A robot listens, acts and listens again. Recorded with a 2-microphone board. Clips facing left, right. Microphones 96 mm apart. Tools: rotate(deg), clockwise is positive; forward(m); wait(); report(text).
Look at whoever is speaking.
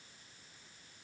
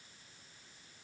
wait()
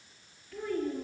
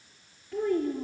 rotate(20)
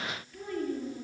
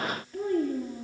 rotate(30)
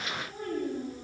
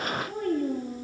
rotate(125)
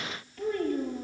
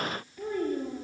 rotate(15)
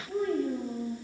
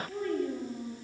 report("Facing the child speaking.")